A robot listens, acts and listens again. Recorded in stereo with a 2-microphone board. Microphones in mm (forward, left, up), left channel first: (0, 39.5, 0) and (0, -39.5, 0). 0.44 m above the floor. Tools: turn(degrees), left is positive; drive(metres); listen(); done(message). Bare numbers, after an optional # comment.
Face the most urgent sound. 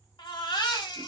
turn(90)
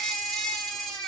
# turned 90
done("Facing the baby crying, under 1 m away.")